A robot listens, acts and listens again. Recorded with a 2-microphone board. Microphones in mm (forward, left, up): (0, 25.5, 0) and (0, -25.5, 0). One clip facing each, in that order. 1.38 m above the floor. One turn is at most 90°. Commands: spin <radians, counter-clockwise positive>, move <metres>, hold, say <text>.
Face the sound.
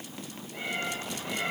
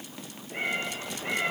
spin -0.79
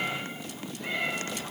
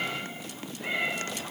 spin -0.17
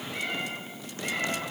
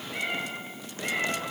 spin -0.17
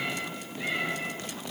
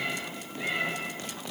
say Facing the cat meowing, over 4 m away.